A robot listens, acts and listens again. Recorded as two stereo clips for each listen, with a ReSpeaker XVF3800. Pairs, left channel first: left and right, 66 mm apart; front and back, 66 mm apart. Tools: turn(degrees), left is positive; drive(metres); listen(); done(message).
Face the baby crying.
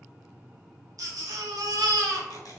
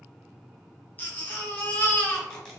turn(degrees=-65)
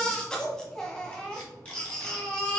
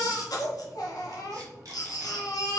turn(degrees=10)
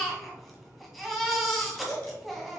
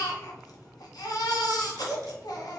done("Facing the baby crying, 1 to 2 m away.")